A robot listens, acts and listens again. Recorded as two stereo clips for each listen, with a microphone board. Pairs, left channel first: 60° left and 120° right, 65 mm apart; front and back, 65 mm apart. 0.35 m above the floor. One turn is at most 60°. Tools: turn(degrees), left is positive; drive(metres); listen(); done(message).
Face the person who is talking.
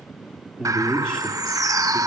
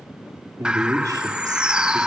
turn(degrees=60)
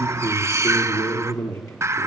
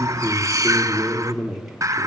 turn(degrees=60)
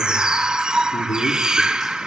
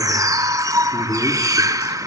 turn(degrees=50)
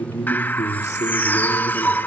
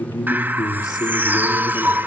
turn(degrees=10)
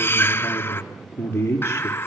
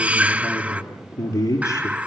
done("Found it: a man speaking, straight ahead, over 4 m away.")